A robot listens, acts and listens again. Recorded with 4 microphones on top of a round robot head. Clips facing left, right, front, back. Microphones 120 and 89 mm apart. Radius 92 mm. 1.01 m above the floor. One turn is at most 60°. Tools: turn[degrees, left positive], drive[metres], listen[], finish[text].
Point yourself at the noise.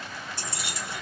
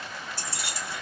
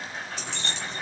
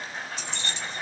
Thought: The keys jangling: 20° left.
Action: turn[20]
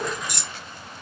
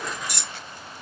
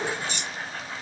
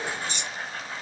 Action: finish[Facing the keys jangling.]